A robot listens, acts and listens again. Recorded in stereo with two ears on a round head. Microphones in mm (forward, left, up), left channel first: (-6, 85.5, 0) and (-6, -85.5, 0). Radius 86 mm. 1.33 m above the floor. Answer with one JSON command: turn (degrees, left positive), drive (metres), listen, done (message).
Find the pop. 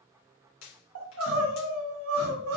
{"turn": 90}
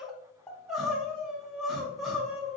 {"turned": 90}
{"done": "Facing where the pop came from. I can't hear it now."}